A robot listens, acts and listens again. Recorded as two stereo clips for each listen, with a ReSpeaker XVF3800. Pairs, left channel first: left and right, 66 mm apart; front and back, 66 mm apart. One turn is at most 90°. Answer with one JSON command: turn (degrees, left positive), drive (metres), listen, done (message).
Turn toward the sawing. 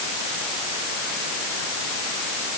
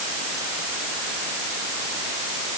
{"listen": true}
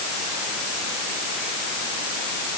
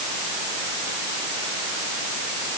{"listen": true}
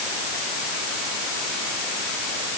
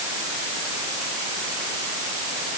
{"done": "I can't make out sawing to turn to."}